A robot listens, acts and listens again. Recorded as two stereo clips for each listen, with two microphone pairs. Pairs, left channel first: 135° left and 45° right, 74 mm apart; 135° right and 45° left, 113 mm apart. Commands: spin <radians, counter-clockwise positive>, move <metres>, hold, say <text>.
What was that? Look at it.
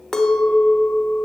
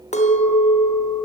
spin -2.44
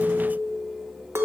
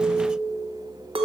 spin 0.17
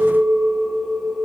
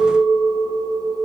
say Facing the clink, under 1 m away.